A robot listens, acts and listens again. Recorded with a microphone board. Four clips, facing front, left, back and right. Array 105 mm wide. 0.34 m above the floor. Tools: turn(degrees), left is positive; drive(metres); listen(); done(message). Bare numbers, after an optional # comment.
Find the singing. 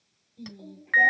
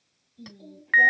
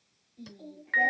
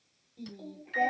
# The singing: 75° right.
turn(-75)
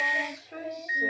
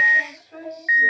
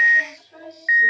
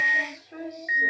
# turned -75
done("Facing the singing, 1 to 2 m away.")